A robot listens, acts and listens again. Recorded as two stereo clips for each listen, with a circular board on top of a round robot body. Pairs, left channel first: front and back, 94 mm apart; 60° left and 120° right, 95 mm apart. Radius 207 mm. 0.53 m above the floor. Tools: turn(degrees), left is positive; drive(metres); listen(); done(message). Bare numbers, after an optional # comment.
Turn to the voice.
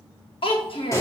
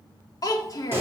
# The child speaking: 10° left.
turn(10)
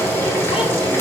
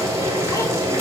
listen()
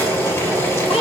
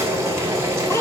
listen()
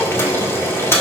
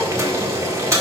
done("I heard a child speaking from this way, but can't make it out now.")